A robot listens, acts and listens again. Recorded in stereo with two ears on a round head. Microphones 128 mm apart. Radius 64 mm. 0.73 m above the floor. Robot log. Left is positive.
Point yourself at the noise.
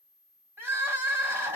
note: The crying: about 15° right or 165° right.
cmd yaw -15
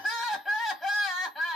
end: Found it: crying, straight ahead.